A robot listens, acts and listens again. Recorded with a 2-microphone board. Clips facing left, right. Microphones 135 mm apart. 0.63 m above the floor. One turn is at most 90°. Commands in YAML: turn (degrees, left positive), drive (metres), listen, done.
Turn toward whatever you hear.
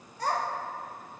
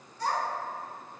turn: 50
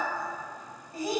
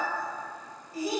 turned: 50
turn: 55
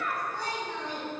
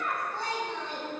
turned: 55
turn: -25
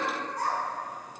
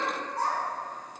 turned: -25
turn: -25
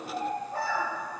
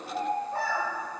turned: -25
turn: -30
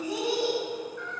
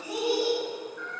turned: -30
turn: -10
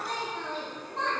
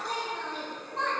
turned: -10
done: "Facing the child speaking."